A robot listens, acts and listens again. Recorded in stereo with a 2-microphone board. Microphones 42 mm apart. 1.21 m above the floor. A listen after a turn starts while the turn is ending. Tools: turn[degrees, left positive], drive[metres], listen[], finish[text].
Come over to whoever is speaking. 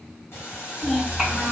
Action: turn[30]
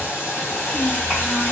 Thought: So it is at 140° left.
Action: turn[140]
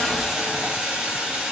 Action: listen[]
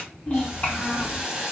Thought: The child speaking is now 40° left.
Action: turn[40]
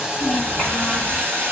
Action: listen[]
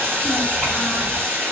Action: listen[]
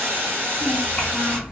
Thought: The child speaking is now 10° left.
Action: turn[10]
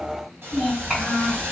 Action: drive[1.0]
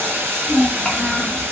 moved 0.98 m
Action: drive[1.0]
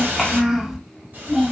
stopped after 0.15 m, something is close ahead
Action: finish[Arrived at the child speaking, straight ahead.]